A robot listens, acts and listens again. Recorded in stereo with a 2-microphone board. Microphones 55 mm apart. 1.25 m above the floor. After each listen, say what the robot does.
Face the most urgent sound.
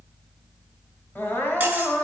Turn 40° left.
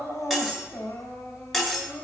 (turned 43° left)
Turn 95° left.
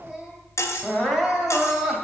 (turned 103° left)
Facing the crying, 2 to 4 m away.